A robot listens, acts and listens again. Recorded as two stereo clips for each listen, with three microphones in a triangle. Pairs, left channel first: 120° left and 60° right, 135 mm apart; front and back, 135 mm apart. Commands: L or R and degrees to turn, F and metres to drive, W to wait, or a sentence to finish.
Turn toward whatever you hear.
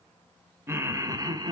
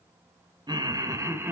R110
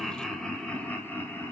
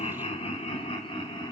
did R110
L50
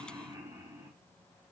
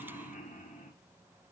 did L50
Facing the laughter.